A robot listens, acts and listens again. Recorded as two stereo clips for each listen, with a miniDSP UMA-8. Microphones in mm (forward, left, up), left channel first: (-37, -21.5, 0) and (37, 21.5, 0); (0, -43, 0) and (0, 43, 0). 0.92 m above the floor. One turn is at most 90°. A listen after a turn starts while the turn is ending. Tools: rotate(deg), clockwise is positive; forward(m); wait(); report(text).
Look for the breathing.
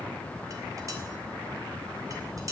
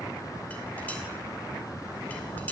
wait()
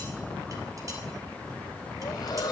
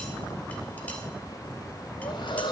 rotate(90)
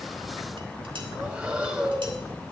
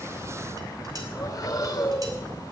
rotate(45)
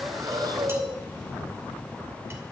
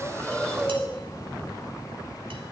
report("Facing the breathing.")